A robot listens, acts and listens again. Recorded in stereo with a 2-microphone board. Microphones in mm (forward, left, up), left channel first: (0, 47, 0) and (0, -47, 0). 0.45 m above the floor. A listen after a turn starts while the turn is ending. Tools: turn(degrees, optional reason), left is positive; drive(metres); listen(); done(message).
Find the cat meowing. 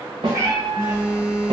turn(degrees=-45, reason="The cat meowing: about 45° right or 135° right.")
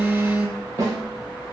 listen()
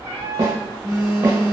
turn(degrees=-35, reason="So it is at 35° right.")
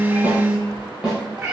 turn(degrees=-20, reason="The cat meowing is now 20° right.")
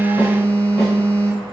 listen()
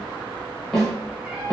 turn(degrees=-15, reason="The cat meowing is now 15° right.")
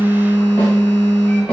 listen()
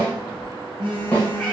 listen()
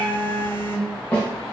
done("Facing where the cat meowing came from. I can't hear it now.")